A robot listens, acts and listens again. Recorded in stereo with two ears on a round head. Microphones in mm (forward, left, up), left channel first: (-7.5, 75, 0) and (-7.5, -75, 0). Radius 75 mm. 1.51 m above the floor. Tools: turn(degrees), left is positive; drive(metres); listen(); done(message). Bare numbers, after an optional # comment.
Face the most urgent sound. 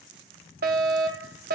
# The fire alarm: about 60° right or 120° right.
turn(-60)
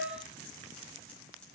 # So it is at 55° right.
turn(-55)
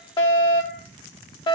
# The fire alarm is now 25° left.
turn(25)
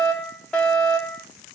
done("Found it: a fire alarm, straight ahead.")